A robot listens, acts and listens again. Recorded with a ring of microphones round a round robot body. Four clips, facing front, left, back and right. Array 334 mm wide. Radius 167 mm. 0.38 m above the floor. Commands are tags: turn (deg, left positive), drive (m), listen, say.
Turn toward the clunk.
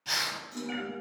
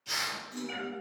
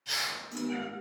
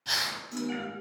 <turn deg="-115"/>
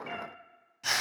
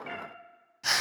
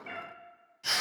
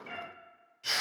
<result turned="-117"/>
<say>I heard a clunk from this way, but can't make it out now.</say>